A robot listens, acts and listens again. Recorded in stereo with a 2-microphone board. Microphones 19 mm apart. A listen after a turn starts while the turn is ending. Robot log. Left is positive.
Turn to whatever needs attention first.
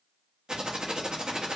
cmd idle
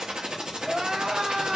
note: The crying: about 65° right or 115° right.
cmd yaw -65
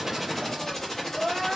note: So it is at 10° right.
cmd yaw -10
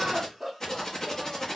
end: Found it: crying, straight ahead.